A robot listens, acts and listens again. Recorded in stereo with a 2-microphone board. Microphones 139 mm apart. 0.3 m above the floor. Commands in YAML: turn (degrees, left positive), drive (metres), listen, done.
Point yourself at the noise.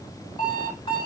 turn: 35
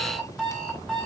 done: "Found it: an alarm clock, straight ahead."